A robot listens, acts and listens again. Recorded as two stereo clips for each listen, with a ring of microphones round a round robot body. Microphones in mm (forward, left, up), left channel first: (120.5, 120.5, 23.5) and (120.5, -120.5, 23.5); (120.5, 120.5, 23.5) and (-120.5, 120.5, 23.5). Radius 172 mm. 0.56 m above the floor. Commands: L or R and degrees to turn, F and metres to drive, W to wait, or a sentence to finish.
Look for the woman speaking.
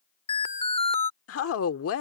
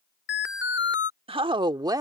L105
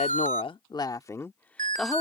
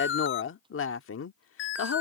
Facing the woman speaking.